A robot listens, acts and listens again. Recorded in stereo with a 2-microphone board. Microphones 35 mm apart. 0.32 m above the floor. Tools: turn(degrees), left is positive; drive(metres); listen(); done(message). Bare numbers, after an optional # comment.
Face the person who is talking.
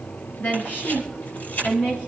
# The woman speaking: about 60° left or 120° left.
turn(60)
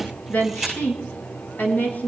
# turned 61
# So it is at 65° left.
turn(65)
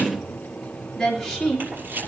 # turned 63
# The woman speaking is now 10° left.
turn(10)
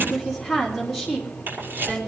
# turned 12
done("Facing the woman speaking.")